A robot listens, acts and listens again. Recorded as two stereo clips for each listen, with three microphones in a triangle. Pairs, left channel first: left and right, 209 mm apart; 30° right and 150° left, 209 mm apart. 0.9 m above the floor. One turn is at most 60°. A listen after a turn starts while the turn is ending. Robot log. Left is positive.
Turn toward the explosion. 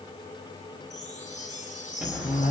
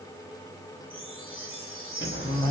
note: The explosion: 10° right.
cmd yaw -10
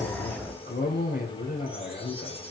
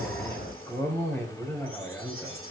end: Found it: an explosion, straight ahead.